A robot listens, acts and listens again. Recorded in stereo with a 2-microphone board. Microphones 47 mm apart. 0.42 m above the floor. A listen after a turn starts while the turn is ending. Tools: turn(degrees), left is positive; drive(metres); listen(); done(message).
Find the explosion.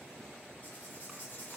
listen()
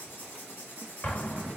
turn(degrees=35)
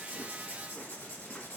listen()
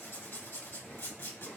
done("I heard an explosion, but can't make it out now. It was about straight ahead or 110° left.")